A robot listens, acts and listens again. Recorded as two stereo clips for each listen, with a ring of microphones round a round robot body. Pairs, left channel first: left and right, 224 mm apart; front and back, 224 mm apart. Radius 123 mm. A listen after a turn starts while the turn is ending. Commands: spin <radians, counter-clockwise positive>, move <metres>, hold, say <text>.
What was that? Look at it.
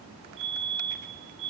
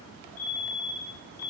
spin -0.44
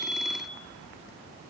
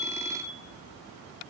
say Facing the fire alarm, over 4 m away.